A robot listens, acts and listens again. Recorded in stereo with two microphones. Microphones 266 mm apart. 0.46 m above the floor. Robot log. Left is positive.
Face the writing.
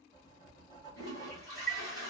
note: The writing: about 15° left or 165° left.
cmd yaw +15
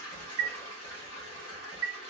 note: So it is at 150° left.
cmd yaw +150
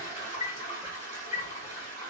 cmd idle
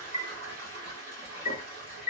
cmd idle
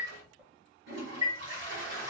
end: Facing the writing.